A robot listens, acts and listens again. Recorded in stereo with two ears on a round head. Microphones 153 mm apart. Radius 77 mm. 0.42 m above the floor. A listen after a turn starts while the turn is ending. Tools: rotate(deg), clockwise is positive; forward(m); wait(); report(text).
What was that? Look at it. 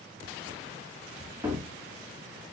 rotate(30)
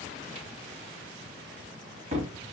rotate(140)
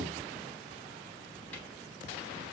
wait()
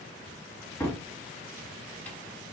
rotate(-10)
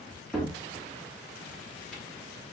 report("Facing the cupboard door, 1 to 2 m away.")